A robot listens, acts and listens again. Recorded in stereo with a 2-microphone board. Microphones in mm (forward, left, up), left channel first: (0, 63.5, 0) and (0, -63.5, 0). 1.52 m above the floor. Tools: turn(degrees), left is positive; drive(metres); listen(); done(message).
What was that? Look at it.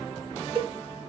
turn(degrees=-45)
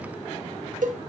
turn(degrees=-95)
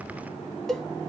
done("Facing the cowbell, under 1 m away.")